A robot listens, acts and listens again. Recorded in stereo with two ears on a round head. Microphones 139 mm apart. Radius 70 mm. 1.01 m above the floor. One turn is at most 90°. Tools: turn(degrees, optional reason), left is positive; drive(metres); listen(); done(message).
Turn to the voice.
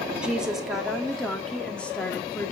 turn(degrees=30)
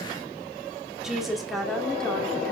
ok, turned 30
turn(degrees=30)
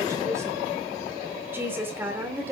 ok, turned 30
turn(degrees=-15, reason="So it is at 15° right.")
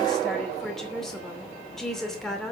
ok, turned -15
done("Found it: a woman speaking, straight ahead, 2 to 4 m away.")